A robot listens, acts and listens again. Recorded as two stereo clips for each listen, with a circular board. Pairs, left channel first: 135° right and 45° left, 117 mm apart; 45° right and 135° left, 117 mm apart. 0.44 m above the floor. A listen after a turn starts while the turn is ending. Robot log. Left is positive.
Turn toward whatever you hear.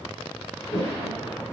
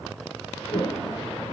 note: The toilet flushing: 95° right.
cmd yaw -95
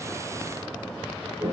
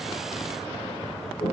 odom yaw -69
note: The toilet flushing is now 25° right.
cmd yaw -25
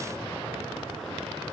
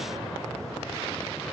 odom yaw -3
note: Nothing new. It was at 20° right.
cmd yaw -20
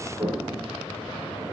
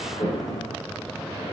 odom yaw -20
end: Facing the toilet flushing, over 4 m away.